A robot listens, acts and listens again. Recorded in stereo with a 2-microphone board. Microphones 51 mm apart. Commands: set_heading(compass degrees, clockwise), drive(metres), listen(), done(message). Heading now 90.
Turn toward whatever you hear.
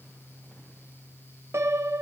set_heading(155)
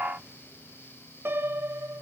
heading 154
set_heading(204)
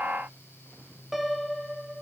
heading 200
done("Found it: a piano, straight ahead, 1 to 2 m away.")